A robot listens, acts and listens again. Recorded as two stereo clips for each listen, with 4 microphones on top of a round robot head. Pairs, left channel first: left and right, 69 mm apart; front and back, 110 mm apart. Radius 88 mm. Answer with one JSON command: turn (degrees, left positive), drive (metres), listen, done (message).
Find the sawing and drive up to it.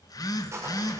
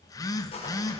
{"turn": -45}
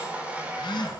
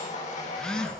{"turn": -20}
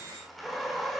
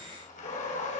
{"drive": 1.0}
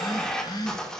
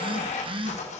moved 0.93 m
{"turn": 10}
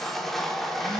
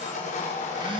{"drive": 1.0}
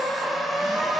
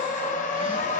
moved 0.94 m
{"drive": 1.0}
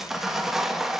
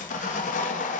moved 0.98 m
{"drive": 1.0}
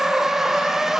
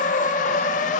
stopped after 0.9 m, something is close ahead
{"done": "I am next to the sawing."}